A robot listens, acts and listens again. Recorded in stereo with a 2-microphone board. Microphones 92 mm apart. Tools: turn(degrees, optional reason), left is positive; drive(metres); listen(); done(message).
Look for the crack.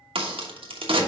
turn(degrees=-90)
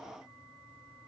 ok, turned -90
done("I heard a crack from this way, but can't make it out now.")